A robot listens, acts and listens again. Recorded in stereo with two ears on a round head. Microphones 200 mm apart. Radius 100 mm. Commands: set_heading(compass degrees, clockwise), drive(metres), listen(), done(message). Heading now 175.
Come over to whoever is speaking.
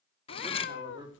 set_heading(195)
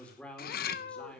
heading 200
drive(1.0)
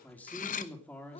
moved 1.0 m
drive(1.0)
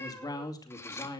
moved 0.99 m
set_heading(185)
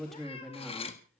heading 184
drive(1.0)
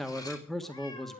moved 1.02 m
drive(1.0)
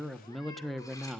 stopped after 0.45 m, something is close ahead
done("Arrived at the man speaking, straight ahead.")